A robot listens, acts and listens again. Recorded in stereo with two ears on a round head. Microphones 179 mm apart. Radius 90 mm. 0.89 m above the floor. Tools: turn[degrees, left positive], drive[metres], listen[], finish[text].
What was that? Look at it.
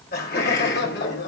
Thought: The laughter: about 55° left or 125° left.
Action: turn[55]
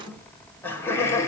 Thought: So it is at 15° left.
Action: turn[15]
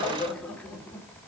Thought: The laughter is now 10° left.
Action: turn[10]
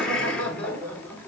Thought: The laughter is now 10° left.
Action: turn[10]
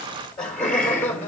Thought: The laughter is now 10° left.
Action: turn[10]
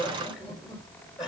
Action: finish[Found it: laughter, straight ahead, 2 to 4 m away.]